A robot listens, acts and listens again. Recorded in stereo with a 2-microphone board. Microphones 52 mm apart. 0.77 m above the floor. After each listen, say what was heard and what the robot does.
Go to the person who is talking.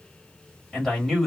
Turn 30° left.
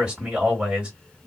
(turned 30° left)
So it is at 25° right. Turn 25° right.
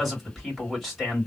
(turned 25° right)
Drive 1.0 m forward.
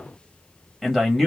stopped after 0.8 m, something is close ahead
I am next to the man speaking.